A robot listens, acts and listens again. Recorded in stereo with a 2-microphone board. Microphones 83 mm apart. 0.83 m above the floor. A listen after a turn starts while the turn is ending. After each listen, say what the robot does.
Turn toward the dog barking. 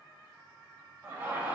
Keep listening.
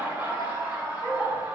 Turn 15° left.
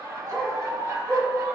Turn 30° left.
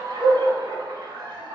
Turn 30° right.
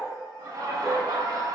Keep listening.
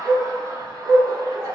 Turn 10° right.
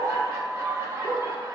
Keep listening.
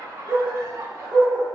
Found it: a dog barking, straight ahead, 2 to 4 m away.